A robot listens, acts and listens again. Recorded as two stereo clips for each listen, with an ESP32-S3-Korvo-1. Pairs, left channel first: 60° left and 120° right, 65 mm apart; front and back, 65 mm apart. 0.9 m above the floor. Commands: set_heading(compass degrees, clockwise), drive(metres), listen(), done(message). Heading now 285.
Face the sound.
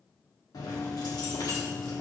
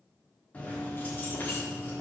set_heading(235)
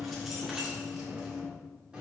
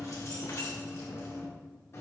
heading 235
set_heading(280)
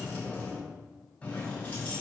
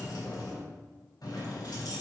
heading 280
done("Facing the keys jangling, 2 to 4 m away.")